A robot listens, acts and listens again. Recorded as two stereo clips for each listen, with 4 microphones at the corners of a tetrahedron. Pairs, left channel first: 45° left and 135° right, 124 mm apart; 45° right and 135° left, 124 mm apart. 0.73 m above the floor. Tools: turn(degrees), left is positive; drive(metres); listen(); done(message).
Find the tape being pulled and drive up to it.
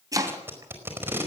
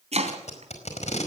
turn(degrees=-65)
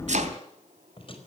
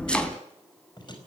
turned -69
drive(metres=1.0)
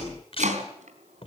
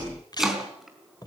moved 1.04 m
turn(degrees=10)
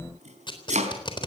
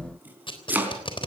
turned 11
drive(metres=1.0)
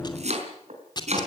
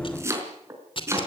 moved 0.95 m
drive(metres=1.0)
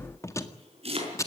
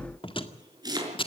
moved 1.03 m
turn(degrees=-15)
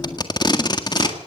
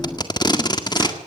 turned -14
drive(metres=1.0)
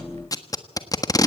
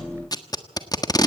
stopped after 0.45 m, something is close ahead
done("Arrived at the tape being pulled, straight ahead.")